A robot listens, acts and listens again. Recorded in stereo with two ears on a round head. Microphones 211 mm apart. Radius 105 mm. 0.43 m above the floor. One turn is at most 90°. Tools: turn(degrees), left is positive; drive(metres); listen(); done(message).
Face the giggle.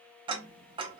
listen()
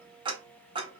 listen()
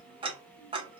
done("I can't make out a giggle to turn to.")